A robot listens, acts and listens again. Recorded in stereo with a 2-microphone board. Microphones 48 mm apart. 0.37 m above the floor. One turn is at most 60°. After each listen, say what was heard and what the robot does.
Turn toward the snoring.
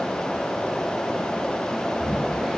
Turn 30° right.
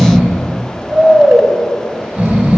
So it is at 145° right. Turn 60° right.
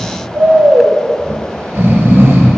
The snoring is now 80° right. Turn 60° right.
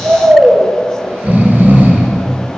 The snoring is now 45° right. Turn 45° right.
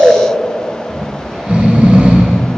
The snoring is now 30° right. Turn 30° right.
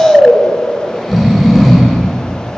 Found it: snoring, straight ahead.